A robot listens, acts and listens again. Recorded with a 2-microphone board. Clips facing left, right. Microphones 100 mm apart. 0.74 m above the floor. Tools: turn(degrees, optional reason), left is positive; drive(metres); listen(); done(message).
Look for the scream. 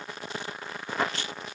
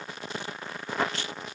listen()
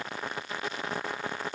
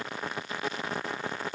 listen()
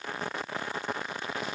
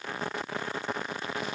done("I can't make out a scream to turn to.")